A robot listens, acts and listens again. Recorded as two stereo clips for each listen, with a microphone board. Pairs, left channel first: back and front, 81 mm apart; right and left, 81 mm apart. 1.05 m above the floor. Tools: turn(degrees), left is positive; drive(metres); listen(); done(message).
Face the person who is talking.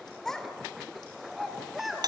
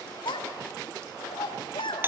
turn(degrees=-90)
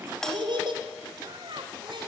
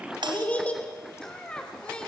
turn(degrees=-10)
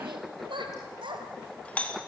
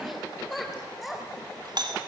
done("Found it: a child speaking, straight ahead.")